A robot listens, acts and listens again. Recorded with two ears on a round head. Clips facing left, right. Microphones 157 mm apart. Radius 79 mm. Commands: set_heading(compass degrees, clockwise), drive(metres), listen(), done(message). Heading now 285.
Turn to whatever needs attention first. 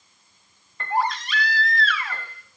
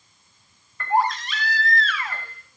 set_heading(325)
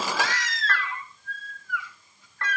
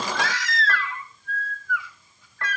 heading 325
set_heading(65)
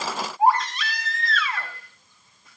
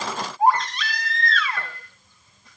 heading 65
done("Found it: a baby crying, straight ahead.")